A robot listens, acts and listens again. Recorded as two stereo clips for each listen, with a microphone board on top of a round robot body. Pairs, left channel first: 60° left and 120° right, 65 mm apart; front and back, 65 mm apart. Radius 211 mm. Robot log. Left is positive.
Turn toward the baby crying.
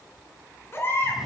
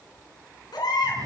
end: Facing the baby crying.